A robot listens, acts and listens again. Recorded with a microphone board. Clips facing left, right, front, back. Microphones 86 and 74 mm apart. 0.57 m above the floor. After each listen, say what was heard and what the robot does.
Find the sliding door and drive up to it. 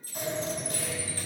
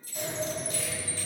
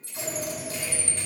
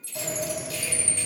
The sliding door: 170° left. Turn 170° left.
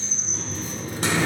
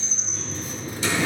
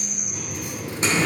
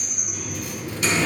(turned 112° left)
The sliding door is now 55° left. Turn 55° left.
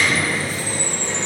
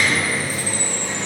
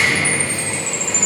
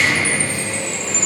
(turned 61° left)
Drive 1.0 m forward.
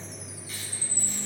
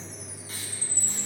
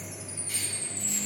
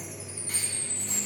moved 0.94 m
Keep listening.
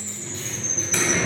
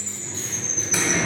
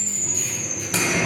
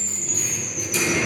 The sliding door is now 10° right. Turn 10° right.
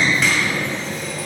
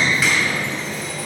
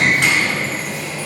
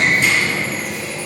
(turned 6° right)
Drive 1.0 m forward.
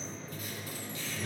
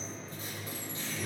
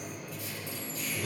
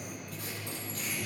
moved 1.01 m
Drive 1.0 m forward.
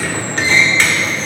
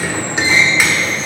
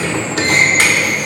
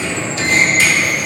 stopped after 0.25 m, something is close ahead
The sliding door is now 10° right. Turn 10° right.
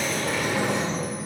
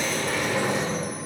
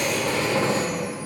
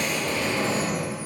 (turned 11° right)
I am next to the sliding door.